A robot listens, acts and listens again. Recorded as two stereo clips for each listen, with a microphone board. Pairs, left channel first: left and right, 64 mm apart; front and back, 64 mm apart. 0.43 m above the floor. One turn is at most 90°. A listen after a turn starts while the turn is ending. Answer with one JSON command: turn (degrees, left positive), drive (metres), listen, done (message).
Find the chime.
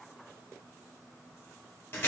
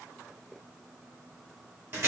{"listen": true}
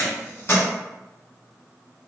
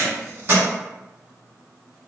{"listen": true}
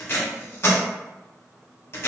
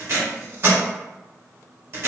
{"done": "I can't make out a chime to turn to."}